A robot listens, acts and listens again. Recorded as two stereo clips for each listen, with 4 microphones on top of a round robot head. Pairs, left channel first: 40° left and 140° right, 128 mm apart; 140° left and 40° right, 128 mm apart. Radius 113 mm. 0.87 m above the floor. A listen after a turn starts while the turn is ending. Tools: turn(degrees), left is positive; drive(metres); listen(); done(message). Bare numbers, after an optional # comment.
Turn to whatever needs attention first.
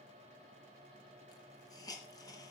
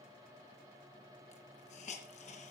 listen()
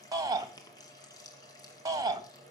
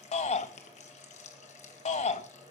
# The shout: 160° left.
turn(160)
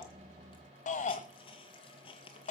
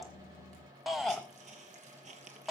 # The shout is now 50° left.
turn(50)
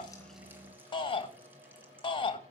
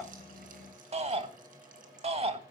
done("Facing the shout, 2 to 4 m away.")